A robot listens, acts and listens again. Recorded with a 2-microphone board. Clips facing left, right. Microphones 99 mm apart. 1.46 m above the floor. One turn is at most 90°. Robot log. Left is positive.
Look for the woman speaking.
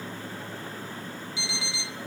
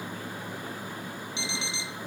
cmd idle
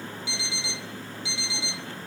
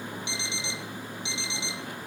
cmd idle
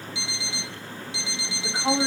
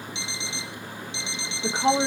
note: The woman speaking: about 60° right or 120° right.
cmd yaw -60
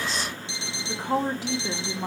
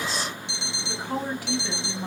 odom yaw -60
note: So it is at 20° left.
cmd yaw +20
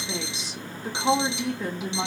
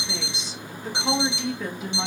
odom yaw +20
end: Found it: a woman speaking, straight ahead.